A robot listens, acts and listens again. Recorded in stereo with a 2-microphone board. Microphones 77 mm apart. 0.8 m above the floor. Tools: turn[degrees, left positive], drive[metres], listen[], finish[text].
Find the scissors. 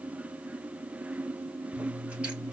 Action: turn[-30]
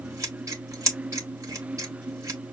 Thought: So it is at 130° right.
Action: turn[-130]
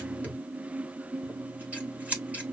Thought: The scissors is now 20° right.
Action: turn[-20]
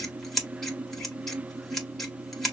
Action: finish[Found it: scissors, straight ahead.]